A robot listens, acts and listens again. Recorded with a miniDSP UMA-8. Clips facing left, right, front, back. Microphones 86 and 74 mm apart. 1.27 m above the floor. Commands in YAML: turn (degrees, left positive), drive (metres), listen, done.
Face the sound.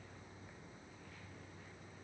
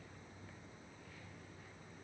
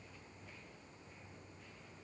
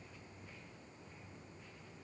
listen: true
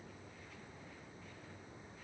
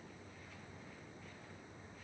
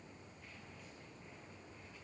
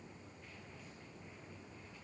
listen: true
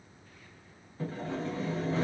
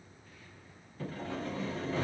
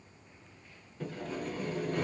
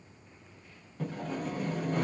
turn: 160
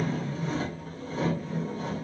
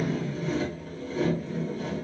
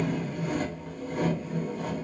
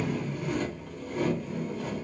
turn: 40
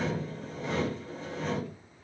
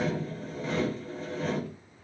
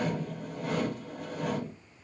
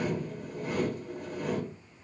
done: "Found it: sawing, straight ahead, 1 to 2 m away."